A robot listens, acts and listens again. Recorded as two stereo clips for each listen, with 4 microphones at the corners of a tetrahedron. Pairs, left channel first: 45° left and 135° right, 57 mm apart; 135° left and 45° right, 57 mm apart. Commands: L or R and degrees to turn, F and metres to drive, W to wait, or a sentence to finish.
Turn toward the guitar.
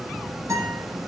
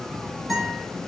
R135
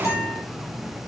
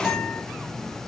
L35
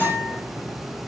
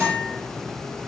Facing the guitar.